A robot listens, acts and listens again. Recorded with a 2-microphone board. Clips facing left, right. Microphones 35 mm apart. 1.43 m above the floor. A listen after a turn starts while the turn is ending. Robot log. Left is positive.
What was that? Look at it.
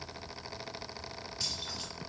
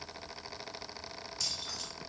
note: The keys jangling: about 20° left or 160° left.
cmd yaw +20
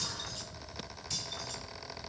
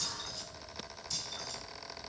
note: So it is at 140° left.
cmd yaw +140
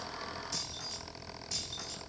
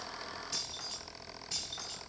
note: The keys jangling is now 25° right.
cmd yaw -25
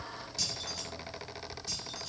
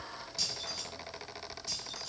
end: Found it: keys jangling, straight ahead, over 4 m away.